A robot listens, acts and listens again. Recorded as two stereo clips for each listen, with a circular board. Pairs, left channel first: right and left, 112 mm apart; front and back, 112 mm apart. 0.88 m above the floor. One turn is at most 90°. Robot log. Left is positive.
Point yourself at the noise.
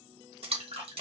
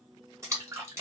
note: The splash: 120° left.
cmd yaw +90
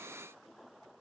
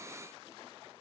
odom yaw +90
note: Nothing new. It was at 30° left.
cmd yaw +30
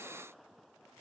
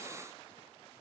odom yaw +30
end: I heard a splash from this way, but can't make it out now.